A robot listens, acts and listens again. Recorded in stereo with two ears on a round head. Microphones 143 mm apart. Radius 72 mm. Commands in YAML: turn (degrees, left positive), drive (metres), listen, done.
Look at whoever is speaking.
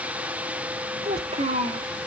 turn: -40
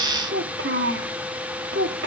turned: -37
turn: -100
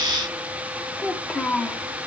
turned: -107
done: "Facing the child speaking, 1 to 2 m away."